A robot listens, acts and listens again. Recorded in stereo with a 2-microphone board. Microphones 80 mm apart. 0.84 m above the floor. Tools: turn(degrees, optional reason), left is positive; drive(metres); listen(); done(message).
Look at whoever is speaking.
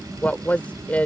turn(degrees=20, reason="The woman speaking: about 20° left or 160° left.")
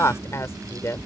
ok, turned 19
turn(degrees=145, reason="So it is at 145° left.")
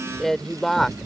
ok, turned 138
done("Found it: a woman speaking, straight ahead.")